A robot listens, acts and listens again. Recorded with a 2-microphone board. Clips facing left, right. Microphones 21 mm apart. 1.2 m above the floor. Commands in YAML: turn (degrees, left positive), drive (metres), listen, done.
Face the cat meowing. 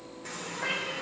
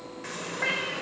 turn: -40
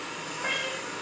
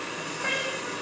turn: -10
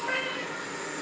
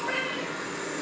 done: "Found it: a cat meowing, straight ahead, 2 to 4 m away."